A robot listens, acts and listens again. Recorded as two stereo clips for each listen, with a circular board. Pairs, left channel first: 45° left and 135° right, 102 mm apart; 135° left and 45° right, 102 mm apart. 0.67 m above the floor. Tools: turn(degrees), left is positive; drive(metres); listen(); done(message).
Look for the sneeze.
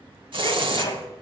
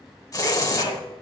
turn(degrees=95)
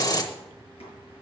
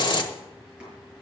done("Facing where the sneeze came from. I can't hear it now.")